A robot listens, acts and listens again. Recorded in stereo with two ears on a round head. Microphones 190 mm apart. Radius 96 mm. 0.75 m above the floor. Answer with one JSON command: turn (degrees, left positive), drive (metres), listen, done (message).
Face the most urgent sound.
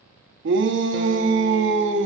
{"turn": -60}
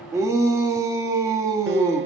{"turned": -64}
{"turn": -15}
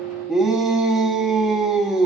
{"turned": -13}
{"done": "Found it: a shout, straight ahead."}